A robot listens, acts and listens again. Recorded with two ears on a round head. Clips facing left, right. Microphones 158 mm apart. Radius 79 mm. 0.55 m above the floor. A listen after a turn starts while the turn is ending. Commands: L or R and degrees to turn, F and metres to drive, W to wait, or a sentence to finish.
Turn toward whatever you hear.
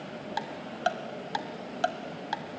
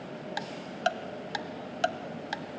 R25
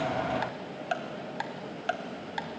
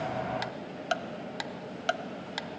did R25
R125
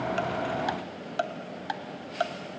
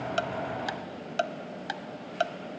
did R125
R30
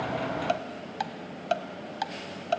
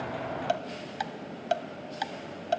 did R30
R10
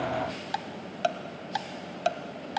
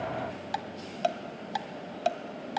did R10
Found it: ticking, straight ahead, 1 to 2 m away.